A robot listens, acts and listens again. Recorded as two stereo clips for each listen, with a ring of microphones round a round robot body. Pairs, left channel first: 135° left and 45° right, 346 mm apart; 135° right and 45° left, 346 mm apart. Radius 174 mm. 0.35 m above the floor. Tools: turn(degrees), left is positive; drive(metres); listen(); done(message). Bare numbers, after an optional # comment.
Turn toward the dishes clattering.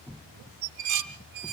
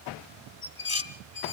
# The dishes clattering: 65° right.
turn(-65)
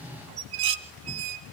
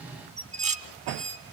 # The dishes clattering is now 25° right.
turn(-25)
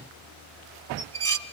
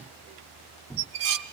# The dishes clattering is now 15° left.
turn(15)
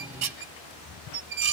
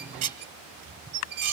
done("Found it: dishes clattering, straight ahead, 1 to 2 m away.")